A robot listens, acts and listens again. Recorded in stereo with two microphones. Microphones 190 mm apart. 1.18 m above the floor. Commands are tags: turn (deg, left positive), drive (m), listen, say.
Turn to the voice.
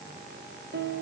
<listen/>
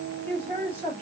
<turn deg="30"/>
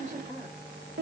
<turn deg="-15"/>
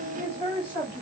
<turn deg="-10"/>
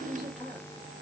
<say>Found it: a man speaking, straight ahead, 2 to 4 m away.</say>